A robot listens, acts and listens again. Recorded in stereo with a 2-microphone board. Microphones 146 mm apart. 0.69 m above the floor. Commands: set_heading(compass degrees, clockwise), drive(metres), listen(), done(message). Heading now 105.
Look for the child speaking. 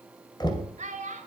set_heading(165)
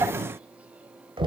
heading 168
listen()
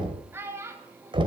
set_heading(188)
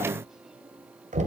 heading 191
listen()
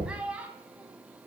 set_heading(201)
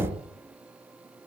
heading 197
listen()
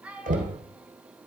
set_heading(207)
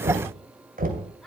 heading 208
listen()
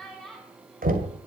done("Facing the child speaking, over 4 m away.")